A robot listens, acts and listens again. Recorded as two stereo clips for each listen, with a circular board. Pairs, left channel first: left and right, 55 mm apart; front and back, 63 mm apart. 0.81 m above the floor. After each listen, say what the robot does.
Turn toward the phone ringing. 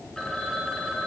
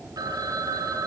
Turn 170° left.
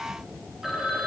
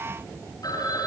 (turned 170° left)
Found it: a phone ringing, straight ahead.